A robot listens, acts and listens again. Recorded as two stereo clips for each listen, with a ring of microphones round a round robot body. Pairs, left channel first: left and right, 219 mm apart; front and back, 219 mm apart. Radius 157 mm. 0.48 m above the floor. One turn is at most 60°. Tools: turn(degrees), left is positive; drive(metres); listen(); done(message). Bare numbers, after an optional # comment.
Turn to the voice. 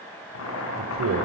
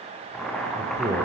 # The man speaking: 105° right.
turn(-60)
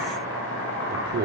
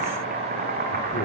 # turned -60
# The man speaking is now 55° right.
turn(-55)
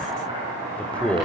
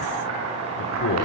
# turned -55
done("Facing the man speaking.")